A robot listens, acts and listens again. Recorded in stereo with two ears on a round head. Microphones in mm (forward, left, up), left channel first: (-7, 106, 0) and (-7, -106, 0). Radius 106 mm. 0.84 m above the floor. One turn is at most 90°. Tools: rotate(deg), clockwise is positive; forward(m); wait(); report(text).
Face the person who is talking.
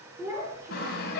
rotate(30)
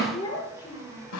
rotate(-20)
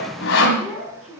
report("Facing the child speaking, over 4 m away.")